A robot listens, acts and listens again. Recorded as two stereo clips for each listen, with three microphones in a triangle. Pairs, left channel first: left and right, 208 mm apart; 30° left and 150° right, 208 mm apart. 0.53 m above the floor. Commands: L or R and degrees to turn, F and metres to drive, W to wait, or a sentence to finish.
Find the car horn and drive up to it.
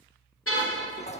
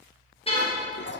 L95
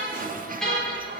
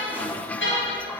F1.0
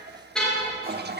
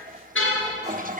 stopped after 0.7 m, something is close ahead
Blocked. The car horn is further on, straight ahead.